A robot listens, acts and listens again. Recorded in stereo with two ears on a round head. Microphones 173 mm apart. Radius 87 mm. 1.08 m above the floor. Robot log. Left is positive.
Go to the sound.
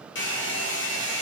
note: The hair dryer: about 70° left or 110° left.
cmd yaw +70
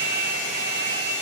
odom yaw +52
note: So it is at 60° left.
cmd yaw +60
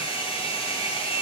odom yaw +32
note: The hair dryer is now 25° left.
cmd yaw +25
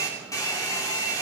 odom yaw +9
note: The hair dryer is now 15° left.
cmd yaw +15
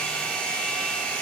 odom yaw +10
cmd fwd 1.0
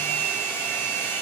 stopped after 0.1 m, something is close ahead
note: The hair dryer is now 10° left.
cmd yaw +10
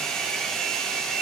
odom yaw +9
end: Something is in my way. I am facing the hair dryer but have not reached it.